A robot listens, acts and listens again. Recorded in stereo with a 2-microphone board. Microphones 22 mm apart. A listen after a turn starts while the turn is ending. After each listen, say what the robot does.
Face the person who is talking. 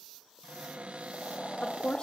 Turn 50° left.
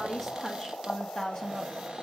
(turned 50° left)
Found it: a woman speaking, straight ahead.